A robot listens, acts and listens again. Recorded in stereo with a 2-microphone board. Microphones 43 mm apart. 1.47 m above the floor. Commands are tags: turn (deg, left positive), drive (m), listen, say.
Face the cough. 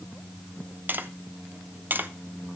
<listen/>
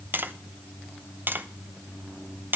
<listen/>
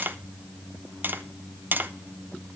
<say>I can't make out a cough, only tapping.</say>